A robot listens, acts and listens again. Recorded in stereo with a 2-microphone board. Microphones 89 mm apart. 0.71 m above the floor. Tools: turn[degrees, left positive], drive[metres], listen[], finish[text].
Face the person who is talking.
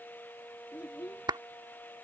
Thought: The child speaking: about 50° left or 130° left.
Action: turn[50]
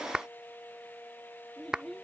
Action: finish[Facing the child speaking.]